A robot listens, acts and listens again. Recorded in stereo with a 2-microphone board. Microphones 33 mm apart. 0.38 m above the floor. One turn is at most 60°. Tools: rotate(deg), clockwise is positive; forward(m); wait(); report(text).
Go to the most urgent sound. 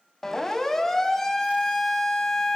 rotate(-30)
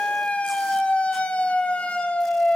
rotate(-60)
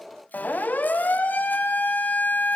rotate(-60)
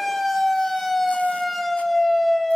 forward(1.0)
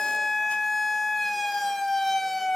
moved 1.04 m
forward(1.0)
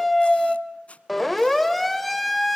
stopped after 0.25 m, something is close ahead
report("I am next to the siren.")